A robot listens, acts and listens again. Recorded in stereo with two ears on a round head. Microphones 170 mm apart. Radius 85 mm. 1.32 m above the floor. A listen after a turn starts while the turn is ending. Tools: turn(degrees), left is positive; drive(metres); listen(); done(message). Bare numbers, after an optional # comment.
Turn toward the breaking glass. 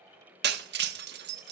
# The breaking glass: about 60° right or 120° right.
turn(-60)
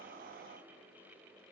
listen()
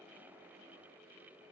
done("I heard breaking glass, but can't make it out now. It was about straight ahead or 60° right.")